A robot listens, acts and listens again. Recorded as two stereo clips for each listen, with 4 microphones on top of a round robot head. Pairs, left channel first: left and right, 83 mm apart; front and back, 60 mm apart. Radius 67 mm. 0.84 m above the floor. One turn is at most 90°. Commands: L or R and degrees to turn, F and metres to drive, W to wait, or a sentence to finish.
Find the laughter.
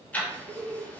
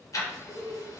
R25
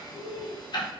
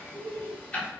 L45
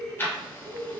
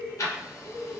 L35
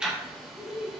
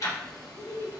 L10
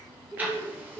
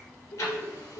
Facing the laughter, 2 to 4 m away.